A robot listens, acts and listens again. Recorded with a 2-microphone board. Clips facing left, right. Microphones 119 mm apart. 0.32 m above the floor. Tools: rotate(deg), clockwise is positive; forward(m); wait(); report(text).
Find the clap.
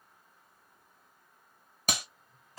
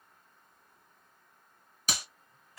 rotate(-55)
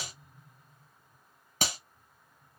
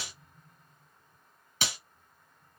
rotate(-55)
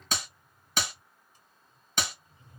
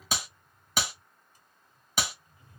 rotate(10)
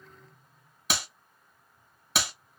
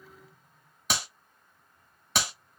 report("Facing the clap.")